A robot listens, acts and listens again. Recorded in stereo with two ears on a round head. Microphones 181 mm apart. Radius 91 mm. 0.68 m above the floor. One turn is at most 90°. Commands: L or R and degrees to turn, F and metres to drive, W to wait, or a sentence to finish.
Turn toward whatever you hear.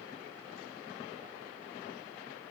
W
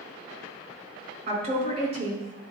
R35
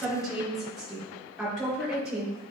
Facing the woman speaking.